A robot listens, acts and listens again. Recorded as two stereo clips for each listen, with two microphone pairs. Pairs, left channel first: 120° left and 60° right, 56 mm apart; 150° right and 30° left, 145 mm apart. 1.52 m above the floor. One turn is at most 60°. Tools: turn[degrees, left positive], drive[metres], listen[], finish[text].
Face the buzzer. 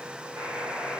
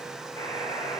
Thought: The buzzer: 90° right.
Action: turn[-60]
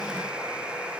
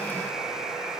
Thought: The buzzer is now 55° right.
Action: turn[-55]
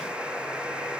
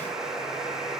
Thought: The buzzer is now 30° right.
Action: turn[-30]
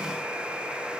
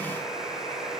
Thought: The buzzer is now 10° left.
Action: turn[10]
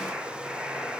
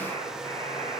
Action: finish[Facing the buzzer, over 4 m away.]